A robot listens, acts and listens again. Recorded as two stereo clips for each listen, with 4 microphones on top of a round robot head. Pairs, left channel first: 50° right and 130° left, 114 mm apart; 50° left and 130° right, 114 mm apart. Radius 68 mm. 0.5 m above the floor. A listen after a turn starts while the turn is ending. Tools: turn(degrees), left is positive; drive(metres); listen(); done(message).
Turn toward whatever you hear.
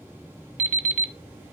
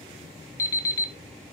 turn(degrees=120)
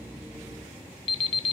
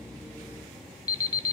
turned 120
done("Facing the alarm clock, 1 to 2 m away.")